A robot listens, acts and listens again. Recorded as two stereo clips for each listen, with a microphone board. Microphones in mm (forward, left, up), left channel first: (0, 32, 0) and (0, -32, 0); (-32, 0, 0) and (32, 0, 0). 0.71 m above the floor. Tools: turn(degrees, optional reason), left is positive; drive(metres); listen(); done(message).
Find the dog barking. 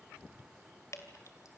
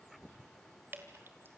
listen()
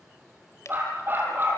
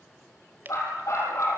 turn(degrees=-145, reason="The dog barking: 145° right.")
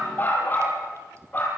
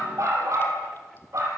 turn(degrees=35, reason="The dog barking is now 35° left.")
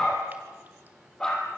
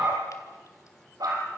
turn(degrees=15, reason="The dog barking is now 15° left.")
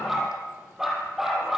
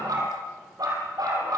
done("Facing the dog barking.")